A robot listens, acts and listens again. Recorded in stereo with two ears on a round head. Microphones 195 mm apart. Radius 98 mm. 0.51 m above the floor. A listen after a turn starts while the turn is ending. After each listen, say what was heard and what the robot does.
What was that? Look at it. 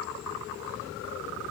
Keep listening.
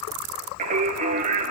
The singing: about 40° right or 140° right. Turn 40° right.
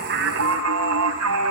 So it is at 105° right. Turn 105° right.
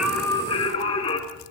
The singing is now 25° left. Turn 25° left.
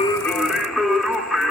Found it: singing, straight ahead, 2 to 4 m away.